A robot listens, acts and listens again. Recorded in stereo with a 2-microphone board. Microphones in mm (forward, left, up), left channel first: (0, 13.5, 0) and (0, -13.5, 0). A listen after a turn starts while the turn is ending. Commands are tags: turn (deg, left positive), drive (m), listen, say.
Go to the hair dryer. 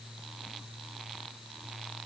<listen/>
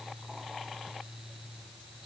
<listen/>
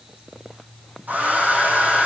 <turn deg="-75"/>
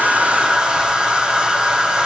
<turn deg="-30"/>
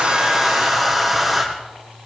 <drive m="1.0"/>
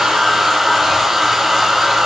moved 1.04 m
<drive m="1.0"/>
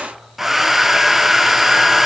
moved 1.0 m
<drive m="1.0"/>
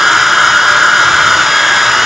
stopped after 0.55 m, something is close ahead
<say>Arrived at the hair dryer, straight ahead.</say>